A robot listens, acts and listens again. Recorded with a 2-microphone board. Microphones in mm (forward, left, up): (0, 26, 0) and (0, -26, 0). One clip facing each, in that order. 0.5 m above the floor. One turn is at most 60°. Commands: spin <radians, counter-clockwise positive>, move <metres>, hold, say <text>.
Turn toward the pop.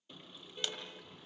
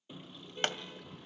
spin -0.87
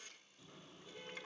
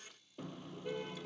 hold
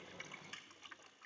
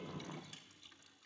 say I heard a pop, but can't make it out now. It was about straight ahead or 80° right.